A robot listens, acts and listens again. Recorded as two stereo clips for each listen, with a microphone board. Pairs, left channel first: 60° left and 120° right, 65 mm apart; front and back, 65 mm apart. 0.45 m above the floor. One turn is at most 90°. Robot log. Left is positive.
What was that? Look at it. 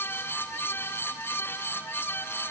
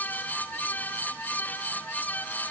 cmd idle
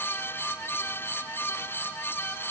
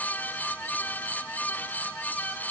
cmd idle
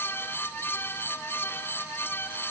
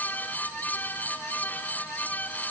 end: I can't make out anything.